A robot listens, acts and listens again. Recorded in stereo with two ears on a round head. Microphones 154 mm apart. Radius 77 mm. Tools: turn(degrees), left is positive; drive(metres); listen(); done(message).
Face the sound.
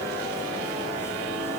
listen()
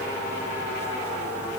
listen()
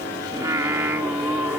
turn(degrees=-30)
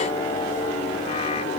listen()
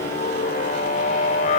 turn(degrees=45)
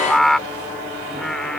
done("Found it: singing, straight ahead.")